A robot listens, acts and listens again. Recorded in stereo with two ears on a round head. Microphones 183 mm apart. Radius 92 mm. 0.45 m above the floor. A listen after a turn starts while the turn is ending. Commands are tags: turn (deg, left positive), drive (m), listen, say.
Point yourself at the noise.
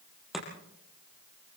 <turn deg="30"/>
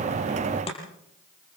<turn deg="150"/>
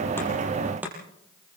<turn deg="-10"/>
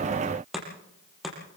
<say>Found it: chopping, straight ahead.</say>